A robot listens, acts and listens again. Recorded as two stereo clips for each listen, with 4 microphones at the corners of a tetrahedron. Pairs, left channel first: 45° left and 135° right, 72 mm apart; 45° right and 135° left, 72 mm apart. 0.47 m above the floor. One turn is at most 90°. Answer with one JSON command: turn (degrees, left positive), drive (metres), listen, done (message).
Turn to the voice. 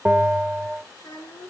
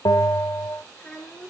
{"turn": 30}
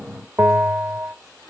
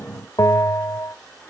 {"listen": true}
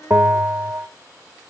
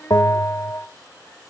{"turn": 15}
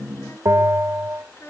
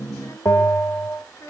{"done": "Found it: a child speaking, straight ahead."}